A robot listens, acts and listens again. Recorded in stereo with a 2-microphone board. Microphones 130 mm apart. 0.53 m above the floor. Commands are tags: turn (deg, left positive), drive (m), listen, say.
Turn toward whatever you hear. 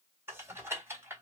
<turn deg="-20"/>
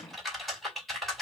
<say>Found it: typing on a keyboard, straight ahead, 2 to 4 m away.</say>